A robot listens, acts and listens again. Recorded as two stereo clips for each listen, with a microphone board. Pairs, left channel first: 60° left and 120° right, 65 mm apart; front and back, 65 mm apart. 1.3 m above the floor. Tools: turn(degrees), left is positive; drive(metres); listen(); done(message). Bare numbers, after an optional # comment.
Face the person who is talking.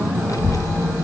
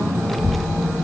# The child speaking: 90° left.
turn(90)
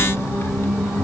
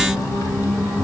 # The child speaking is now 15° left.
turn(15)
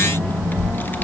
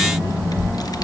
done("Facing the child speaking.")